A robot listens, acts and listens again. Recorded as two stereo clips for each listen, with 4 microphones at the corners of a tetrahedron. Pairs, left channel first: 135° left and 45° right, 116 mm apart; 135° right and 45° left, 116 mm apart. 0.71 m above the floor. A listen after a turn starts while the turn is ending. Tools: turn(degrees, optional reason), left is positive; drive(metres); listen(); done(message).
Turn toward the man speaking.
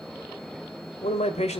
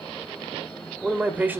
turn(degrees=120, reason="The man speaking: 120° left.")
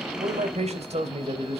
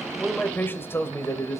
turn(degrees=-70, reason="The man speaking is now 70° right.")
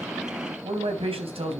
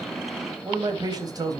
turn(degrees=-15, reason="The man speaking is now 15° right.")
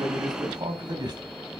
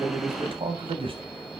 done("Found it: a man speaking, straight ahead, 2 to 4 m away.")